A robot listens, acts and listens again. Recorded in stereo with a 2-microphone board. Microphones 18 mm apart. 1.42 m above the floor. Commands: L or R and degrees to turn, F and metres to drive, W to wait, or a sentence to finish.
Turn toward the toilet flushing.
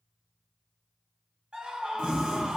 R70
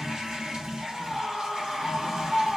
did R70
R40
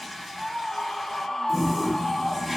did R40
Facing the toilet flushing.